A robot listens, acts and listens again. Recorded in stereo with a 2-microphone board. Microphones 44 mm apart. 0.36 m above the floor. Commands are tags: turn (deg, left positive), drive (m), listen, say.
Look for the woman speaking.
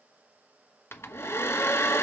<listen/>
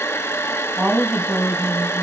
<turn deg="-35"/>
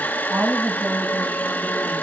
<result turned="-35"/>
<turn deg="-120"/>
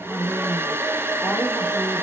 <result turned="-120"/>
<say>Facing the woman speaking, 2 to 4 m away.</say>